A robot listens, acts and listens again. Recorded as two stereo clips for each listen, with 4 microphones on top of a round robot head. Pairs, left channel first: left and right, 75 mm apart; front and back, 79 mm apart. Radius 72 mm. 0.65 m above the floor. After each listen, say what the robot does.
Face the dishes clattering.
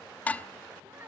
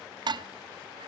Turn 160° left.
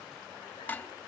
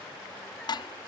Turn 20° left.
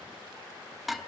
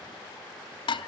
Found it: dishes clattering, straight ahead.